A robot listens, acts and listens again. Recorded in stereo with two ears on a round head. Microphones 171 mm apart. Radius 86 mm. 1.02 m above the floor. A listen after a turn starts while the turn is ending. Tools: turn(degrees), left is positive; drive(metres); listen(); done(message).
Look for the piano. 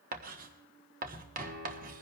turn(degrees=-90)
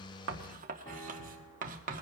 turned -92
listen()
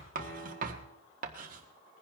turn(degrees=15)
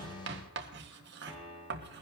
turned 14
done("Found it: a piano, straight ahead, over 4 m away.")